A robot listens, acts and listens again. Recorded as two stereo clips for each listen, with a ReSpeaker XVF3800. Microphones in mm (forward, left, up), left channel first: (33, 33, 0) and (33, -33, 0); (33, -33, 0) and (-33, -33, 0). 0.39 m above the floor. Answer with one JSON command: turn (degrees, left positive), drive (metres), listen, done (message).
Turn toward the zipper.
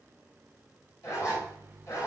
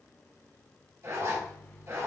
{"turn": 130}
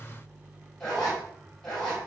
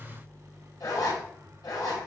{"turn": 10}
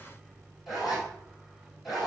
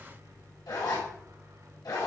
{"done": "Found it: a zipper, straight ahead."}